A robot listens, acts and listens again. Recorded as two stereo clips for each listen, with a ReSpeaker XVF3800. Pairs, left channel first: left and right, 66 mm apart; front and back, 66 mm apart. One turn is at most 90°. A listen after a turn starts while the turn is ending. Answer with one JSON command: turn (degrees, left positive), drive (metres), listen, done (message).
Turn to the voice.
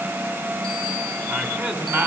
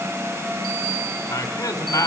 {"turn": -35}
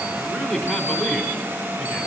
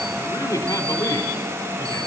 {"done": "Facing the man speaking, 2 to 4 m away."}